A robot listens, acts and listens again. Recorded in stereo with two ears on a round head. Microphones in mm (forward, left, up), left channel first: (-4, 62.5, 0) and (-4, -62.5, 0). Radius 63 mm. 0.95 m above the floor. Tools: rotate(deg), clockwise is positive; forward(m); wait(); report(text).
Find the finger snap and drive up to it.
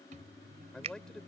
rotate(45)
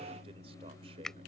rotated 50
forward(1.0)
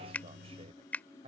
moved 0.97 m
rotate(-10)
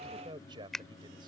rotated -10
forward(1.0)
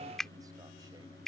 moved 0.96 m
forward(1.0)
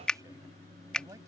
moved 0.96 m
forward(1.0)
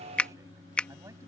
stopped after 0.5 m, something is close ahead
rotate(-10)
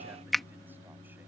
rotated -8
report("I am next to the finger snap.")